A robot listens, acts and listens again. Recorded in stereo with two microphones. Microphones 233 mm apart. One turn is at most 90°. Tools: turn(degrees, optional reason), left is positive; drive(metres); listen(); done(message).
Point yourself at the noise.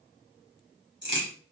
turn(degrees=-50, reason="The crack: about 50° right or 130° right.")
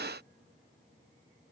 listen()
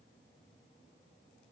done("I heard a crack, but can't make it out now. It was about straight ahead or 80° right.")